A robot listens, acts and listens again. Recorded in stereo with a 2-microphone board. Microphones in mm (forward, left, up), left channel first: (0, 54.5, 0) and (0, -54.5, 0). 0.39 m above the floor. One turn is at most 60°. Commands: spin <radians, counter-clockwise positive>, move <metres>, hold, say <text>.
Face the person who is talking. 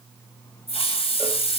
hold
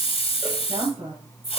spin -1.05
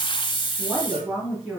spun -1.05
say Found it: a woman speaking, straight ahead.